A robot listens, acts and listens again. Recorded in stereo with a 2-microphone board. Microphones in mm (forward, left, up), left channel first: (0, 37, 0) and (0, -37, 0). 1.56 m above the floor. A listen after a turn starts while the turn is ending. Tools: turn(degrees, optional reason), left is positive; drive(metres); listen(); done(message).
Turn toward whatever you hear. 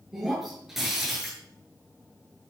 turn(degrees=-30)
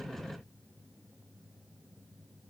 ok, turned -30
listen()
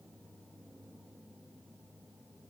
done("I heard breaking glass, but can't make it out now. It was about 25° left or 145° right.")